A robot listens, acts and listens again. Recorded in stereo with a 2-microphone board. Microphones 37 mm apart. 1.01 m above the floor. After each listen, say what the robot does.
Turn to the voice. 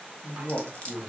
Turn 60° left.
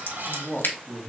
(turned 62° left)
Turn 30° left.
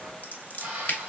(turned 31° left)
Keep listening.
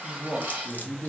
Facing the man speaking, 1 to 2 m away.